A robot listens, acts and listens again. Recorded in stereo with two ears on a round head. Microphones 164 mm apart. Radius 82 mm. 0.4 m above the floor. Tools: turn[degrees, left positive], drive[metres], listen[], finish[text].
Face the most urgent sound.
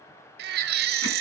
Thought: The baby crying: about 55° right or 125° right.
Action: turn[-55]
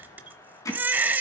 Thought: So it is at 10° right.
Action: turn[-10]
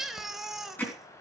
Action: finish[Facing the baby crying.]